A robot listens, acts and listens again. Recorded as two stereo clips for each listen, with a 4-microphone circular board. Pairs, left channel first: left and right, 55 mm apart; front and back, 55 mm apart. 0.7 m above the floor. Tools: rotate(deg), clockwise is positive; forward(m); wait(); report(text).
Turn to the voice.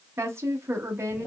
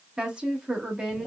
rotate(110)
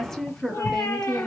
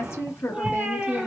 rotate(-10)
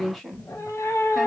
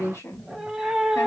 report("Found it: a woman speaking, straight ahead, 1 to 2 m away.")